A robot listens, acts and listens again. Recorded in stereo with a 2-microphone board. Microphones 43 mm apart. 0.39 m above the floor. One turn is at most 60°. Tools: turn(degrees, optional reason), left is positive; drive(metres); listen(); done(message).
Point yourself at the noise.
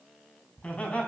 turn(degrees=35, reason="The laughter: about 35° left or 145° left.")
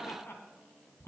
turn(degrees=60, reason="So it is at 110° left.")
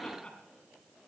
turn(degrees=25, reason="The laughter is now 25° left.")
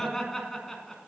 done("Found it: laughter, straight ahead.")